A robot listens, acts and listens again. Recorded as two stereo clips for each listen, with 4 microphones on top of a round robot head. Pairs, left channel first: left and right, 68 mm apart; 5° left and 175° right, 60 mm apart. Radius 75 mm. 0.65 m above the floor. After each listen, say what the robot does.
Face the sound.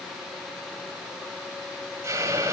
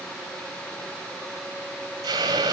Turn 150° right.
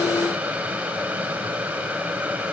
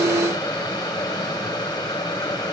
Turn 20° right.
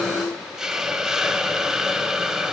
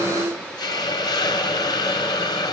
Facing the hiss, under 1 m away.